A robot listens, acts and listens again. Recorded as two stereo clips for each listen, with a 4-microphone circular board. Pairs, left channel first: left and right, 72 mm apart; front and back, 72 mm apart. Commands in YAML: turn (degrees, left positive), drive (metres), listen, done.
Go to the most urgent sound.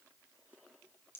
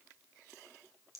listen: true
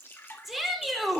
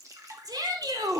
turn: -175
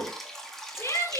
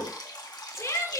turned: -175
turn: 45
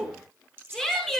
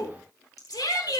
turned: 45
turn: 10
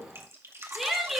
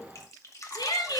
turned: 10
drive: 1.0
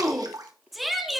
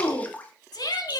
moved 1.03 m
drive: 1.0
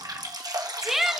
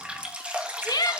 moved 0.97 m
drive: 1.0
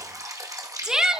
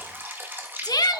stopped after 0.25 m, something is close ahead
turn: -10
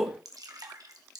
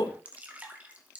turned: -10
done: "I am next to the shout."